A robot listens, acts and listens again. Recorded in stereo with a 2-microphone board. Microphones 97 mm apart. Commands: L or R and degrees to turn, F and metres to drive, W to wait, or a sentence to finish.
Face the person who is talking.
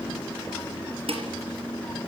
W
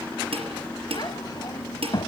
L45
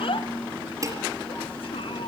L85
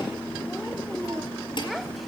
W
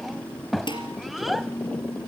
Facing the child speaking, 1 to 2 m away.